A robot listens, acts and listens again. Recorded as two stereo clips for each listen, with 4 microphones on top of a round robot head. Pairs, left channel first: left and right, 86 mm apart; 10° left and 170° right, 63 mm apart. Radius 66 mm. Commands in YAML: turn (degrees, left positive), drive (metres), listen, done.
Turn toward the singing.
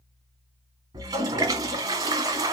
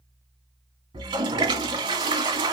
listen: true
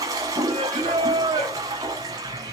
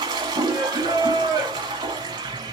turn: -150
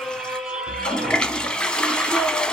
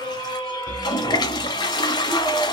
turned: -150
turn: -10
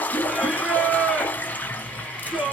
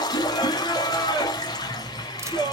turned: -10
done: "Facing the singing."